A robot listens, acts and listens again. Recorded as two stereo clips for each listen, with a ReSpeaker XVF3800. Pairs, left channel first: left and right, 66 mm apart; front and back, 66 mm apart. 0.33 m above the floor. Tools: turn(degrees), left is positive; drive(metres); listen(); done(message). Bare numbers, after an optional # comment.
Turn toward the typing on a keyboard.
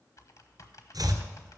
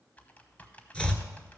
# The typing on a keyboard: 65° left.
turn(65)
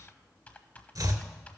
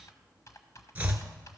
# The typing on a keyboard is now 25° left.
turn(25)
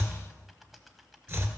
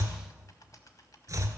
done("Facing the typing on a keyboard.")